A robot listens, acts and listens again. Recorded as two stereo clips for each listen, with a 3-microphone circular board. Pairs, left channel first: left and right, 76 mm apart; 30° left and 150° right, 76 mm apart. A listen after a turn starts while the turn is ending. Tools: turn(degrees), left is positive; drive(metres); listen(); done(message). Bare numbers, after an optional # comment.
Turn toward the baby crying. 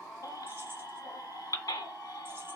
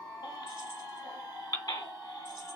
# The baby crying: 60° left.
turn(60)
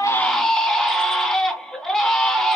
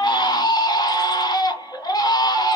done("Facing the baby crying.")